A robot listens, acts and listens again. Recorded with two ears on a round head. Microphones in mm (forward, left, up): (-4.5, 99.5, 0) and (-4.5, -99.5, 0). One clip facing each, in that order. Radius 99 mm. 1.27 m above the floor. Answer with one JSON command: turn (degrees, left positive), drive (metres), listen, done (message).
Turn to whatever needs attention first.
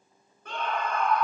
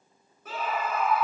{"turn": -30}
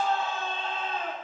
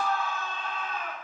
{"turn": 25}
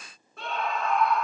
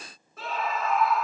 {"done": "Found it: a scream, straight ahead."}